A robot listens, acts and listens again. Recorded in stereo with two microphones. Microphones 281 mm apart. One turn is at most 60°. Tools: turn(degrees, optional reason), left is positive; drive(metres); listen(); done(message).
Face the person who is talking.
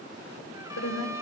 turn(degrees=60, reason="The woman speaking: about 65° left or 115° left.")
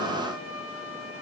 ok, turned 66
listen()
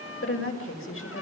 turn(degrees=50, reason="So it is at 50° left.")
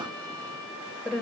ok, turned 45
done("Facing the woman speaking.")